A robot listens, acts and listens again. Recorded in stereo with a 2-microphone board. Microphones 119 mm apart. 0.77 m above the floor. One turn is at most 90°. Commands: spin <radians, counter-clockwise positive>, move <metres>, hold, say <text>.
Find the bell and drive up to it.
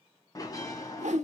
spin 0.52
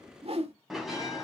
move 1.0
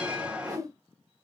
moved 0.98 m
spin -0.17
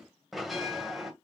move 1.0
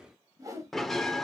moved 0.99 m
move 1.0
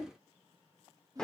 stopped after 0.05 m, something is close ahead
say I am next to the bell.